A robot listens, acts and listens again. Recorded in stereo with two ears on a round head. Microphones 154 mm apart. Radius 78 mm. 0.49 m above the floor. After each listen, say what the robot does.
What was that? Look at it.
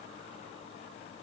Keep listening.
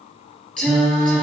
Turn 30° left.
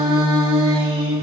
Turn 20° right.
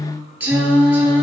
Turn 10° right.
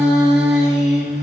Facing the singing.